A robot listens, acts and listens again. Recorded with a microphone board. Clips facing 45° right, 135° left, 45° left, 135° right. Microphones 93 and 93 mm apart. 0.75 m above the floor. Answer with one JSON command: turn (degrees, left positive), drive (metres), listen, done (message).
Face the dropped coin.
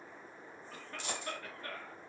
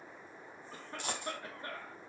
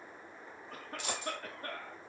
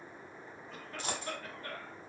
{"turn": 170}
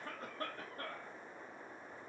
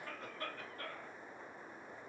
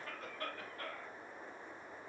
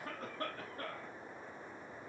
{"done": "Facing where the dropped coin came from. I can't hear it now."}